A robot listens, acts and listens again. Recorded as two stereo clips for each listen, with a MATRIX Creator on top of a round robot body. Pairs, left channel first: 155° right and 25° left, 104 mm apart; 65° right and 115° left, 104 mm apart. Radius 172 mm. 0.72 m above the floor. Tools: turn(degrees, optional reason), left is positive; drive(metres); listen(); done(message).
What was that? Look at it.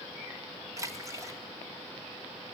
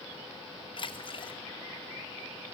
turn(degrees=-35, reason="The splash: 35° right.")
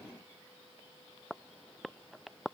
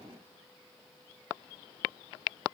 done("I heard a splash from this way, but can't make it out now.")